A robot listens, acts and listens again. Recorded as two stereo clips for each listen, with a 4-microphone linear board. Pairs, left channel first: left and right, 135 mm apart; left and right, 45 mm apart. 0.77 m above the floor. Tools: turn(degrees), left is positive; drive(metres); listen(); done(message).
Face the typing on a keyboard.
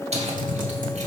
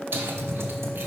turn(degrees=-90)
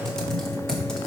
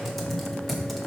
done("Found it: typing on a keyboard, straight ahead, 1 to 2 m away.")